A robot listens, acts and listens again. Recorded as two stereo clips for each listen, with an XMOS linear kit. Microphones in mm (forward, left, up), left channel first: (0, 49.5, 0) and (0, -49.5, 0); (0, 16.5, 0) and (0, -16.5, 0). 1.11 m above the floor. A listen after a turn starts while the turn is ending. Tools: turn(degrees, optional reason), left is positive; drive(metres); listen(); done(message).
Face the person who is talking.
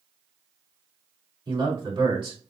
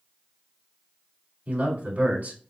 turn(degrees=-55, reason="The man speaking: about 55° right or 125° right.")
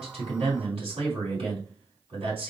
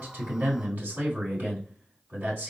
turn(degrees=-70, reason="So it is at 70° right.")
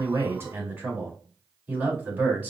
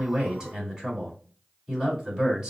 turn(degrees=-15, reason="The man speaking is now 15° right.")
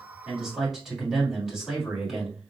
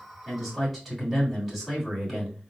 done("Facing the man speaking.")